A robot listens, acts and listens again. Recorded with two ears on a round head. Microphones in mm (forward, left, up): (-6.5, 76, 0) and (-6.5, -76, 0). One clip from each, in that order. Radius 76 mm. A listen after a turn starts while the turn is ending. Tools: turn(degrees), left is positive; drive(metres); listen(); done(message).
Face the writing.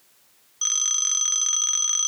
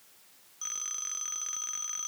listen()
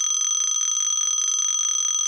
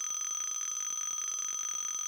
listen()
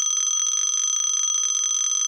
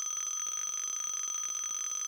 done("I can't make out writing to turn to.")